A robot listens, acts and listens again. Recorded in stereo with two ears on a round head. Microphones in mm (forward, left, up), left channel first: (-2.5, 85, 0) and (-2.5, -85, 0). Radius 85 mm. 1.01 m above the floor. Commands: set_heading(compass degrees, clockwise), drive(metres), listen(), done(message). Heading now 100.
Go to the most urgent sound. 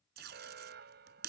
set_heading(160)
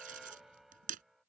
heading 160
drive(1.0)
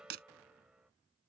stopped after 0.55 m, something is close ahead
done("Something is in my way. I am facing the alarm but have not reached it.")